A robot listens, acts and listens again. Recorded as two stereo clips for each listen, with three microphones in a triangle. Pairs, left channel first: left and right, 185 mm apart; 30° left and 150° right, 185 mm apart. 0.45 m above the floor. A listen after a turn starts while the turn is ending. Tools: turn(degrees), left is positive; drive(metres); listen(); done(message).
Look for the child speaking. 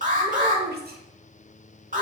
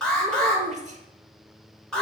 turn(degrees=-105)
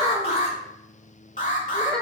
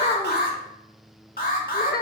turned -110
done("Found it: a child speaking, straight ahead, under 1 m away.")